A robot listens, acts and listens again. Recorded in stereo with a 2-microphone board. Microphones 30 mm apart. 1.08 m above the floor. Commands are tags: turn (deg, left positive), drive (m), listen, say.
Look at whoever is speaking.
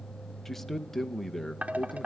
<turn deg="30"/>
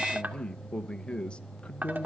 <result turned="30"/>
<turn deg="140"/>
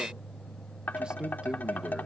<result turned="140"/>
<turn deg="-30"/>
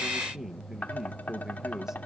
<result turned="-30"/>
<turn deg="-15"/>
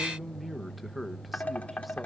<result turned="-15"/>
<say>Facing the man speaking, under 1 m away.</say>